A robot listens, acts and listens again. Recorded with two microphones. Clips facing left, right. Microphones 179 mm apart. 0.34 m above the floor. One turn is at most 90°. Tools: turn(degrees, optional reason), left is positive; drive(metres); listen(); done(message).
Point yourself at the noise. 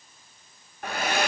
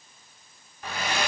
turn(degrees=60, reason="The hair dryer: about 60° left or 120° left.")
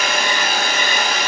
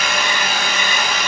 turn(degrees=50, reason="So it is at 50° left.")
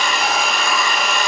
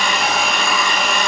done("Facing the hair dryer.")